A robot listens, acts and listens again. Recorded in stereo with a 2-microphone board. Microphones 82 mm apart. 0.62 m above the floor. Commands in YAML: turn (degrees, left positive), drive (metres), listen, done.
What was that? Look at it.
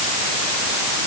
listen: true
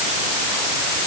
listen: true
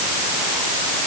done: "I can't make out anything."